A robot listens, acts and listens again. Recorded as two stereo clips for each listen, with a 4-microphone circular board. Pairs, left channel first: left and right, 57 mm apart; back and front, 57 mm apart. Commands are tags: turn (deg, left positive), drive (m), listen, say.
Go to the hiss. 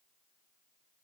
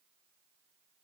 <listen/>
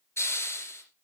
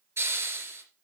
<turn deg="50"/>
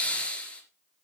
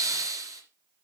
<turn deg="20"/>
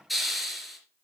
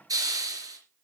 <drive m="1.0"/>
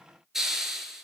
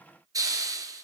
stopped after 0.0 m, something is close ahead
<say>Something is in my way. I am facing the hiss but have not reached it.</say>